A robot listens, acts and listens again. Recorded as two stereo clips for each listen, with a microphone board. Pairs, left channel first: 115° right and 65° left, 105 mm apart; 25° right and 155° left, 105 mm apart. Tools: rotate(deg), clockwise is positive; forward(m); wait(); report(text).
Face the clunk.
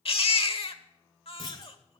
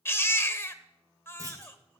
rotate(150)
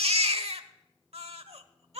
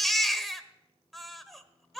report("I heard a clunk from this way, but can't make it out now.")